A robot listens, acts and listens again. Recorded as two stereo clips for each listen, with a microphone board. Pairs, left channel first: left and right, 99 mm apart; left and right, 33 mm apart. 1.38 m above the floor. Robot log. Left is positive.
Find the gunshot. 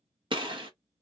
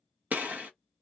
note: The gunshot: about 55° right or 125° right.
cmd yaw -55
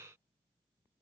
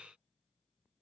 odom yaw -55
cmd idle
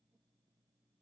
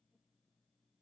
end: I heard a gunshot, but can't make it out now. It was about straight ahead or 70° right.